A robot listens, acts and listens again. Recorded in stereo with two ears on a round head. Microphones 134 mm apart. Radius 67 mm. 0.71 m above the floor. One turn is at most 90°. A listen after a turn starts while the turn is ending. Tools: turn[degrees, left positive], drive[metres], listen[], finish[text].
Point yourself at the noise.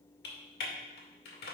Thought: The typing on a keyboard: about 75° left or 105° left.
Action: turn[75]
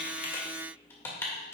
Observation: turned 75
Thought: So it is at 15° left.
Action: turn[15]
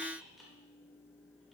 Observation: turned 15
Action: listen[]
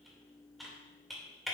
Action: finish[Facing the typing on a keyboard, 2 to 4 m away.]